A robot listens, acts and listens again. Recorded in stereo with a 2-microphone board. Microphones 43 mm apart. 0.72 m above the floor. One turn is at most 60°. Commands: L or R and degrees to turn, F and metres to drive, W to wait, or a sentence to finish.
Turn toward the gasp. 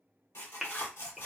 L30
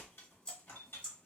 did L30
W
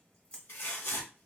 I heard a gasp, but can't make it out now. It was about 30° right or 150° left.